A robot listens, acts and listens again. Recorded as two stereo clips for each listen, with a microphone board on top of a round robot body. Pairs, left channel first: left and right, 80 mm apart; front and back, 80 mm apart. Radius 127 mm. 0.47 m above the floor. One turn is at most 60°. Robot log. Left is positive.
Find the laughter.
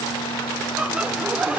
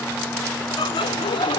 note: The laughter: 15° right.
cmd yaw -15
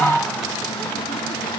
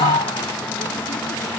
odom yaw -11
end: Facing the laughter.